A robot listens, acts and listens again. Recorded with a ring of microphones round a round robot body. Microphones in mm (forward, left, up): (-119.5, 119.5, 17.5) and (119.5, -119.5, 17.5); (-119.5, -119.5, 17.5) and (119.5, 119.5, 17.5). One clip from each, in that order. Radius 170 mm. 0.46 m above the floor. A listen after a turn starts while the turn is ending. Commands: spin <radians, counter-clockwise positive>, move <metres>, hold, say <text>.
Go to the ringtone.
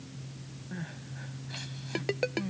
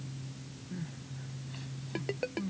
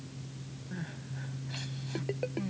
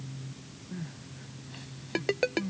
spin 1.22
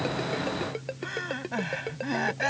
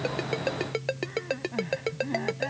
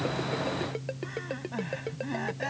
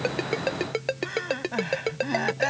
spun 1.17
move 1.0
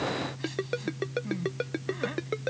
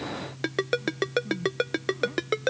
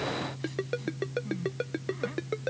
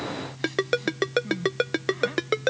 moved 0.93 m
move 1.0
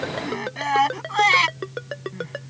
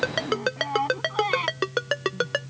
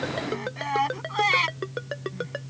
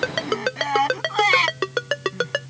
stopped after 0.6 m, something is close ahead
say Blocked. The ringtone is further on, straight ahead.